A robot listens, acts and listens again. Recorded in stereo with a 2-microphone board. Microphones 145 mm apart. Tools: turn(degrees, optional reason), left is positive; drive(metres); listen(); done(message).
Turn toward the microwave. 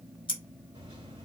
turn(degrees=-40, reason="The microwave: about 40° right or 140° right.")
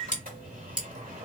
turn(degrees=-100, reason="So it is at 100° right.")
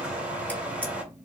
turn(degrees=-10, reason="The microwave is now 10° right.")
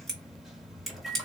done("Facing the microwave.")